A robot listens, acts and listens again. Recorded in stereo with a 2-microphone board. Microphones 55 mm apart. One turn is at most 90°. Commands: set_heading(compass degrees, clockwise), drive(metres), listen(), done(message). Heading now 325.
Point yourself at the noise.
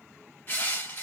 set_heading(290)
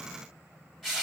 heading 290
done("Facing the crushing, 1 to 2 m away.")